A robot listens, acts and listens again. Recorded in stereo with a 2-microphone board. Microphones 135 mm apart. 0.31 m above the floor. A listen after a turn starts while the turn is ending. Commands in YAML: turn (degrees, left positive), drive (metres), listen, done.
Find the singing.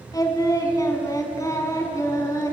turn: 25
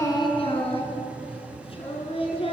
turn: 135
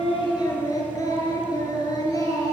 turn: 25
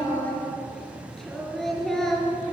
done: "Found it: singing, straight ahead, over 4 m away."